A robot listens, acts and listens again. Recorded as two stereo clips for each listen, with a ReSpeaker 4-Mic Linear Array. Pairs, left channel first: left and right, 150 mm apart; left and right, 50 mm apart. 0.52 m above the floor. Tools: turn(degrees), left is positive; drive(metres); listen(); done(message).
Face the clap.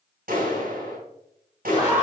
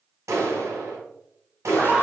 turn(degrees=-90)
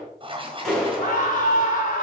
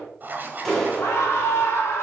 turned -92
done("Found it: a clap, straight ahead.")